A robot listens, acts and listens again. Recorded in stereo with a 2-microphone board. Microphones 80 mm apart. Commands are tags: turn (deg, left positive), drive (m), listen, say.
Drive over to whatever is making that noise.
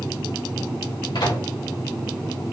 <turn deg="90"/>
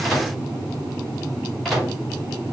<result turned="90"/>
<drive m="1.0"/>
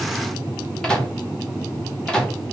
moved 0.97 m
<turn deg="10"/>
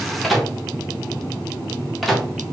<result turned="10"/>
<drive m="1.0"/>
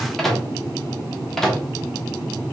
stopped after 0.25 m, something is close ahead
<say>Arrived at the microwave, straight ahead.</say>